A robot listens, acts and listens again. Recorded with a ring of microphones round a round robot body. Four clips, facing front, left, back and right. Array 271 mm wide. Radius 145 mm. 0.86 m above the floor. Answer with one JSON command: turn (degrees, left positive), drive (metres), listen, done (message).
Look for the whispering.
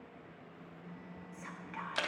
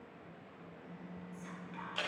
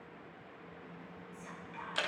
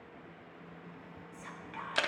{"turn": -35}
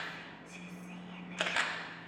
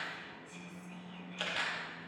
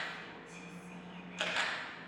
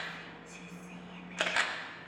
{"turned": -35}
{"turn": -15}
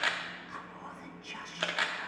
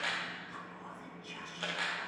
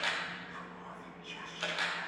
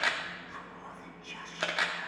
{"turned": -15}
{"done": "Facing the whispering, 1 to 2 m away."}